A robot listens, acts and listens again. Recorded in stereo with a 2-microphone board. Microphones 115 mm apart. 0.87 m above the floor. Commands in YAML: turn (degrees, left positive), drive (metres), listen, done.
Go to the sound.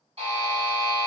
turn: -55
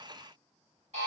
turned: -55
turn: -65
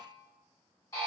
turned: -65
turn: 25
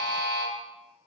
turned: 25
drive: 1.0
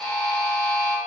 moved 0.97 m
drive: 1.0
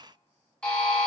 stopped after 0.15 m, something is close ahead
turn: 10
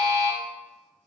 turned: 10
done: "I am next to the buzzer."